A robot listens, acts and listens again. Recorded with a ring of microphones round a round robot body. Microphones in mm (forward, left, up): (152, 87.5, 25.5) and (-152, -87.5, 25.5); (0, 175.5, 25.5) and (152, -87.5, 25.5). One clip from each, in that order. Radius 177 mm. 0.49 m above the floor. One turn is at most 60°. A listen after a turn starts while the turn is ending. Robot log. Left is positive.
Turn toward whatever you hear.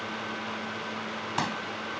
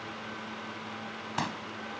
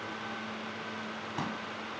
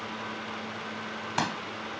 note: The pop: 55° right.
cmd yaw -55
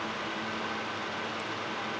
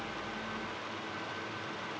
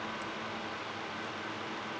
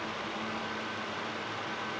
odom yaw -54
end: Facing where the pop came from. I can't hear it now.